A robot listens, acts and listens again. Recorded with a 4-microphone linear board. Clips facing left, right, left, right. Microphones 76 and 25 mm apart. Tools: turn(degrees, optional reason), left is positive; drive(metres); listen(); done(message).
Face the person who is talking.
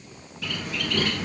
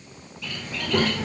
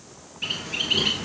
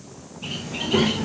turn(degrees=-65, reason="The child speaking: about 65° right or 115° right.")
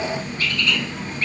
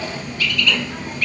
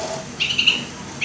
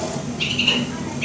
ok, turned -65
turn(degrees=-40, reason="So it is at 40° right.")
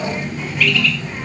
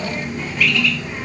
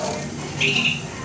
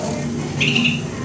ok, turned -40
done("Facing the child speaking, under 1 m away.")